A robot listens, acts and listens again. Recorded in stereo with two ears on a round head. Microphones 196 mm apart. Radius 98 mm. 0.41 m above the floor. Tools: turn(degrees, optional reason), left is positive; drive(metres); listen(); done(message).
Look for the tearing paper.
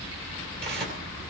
turn(degrees=-50, reason="The tearing paper: about 50° right or 130° right.")
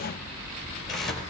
done("Facing the tearing paper, 2 to 4 m away.")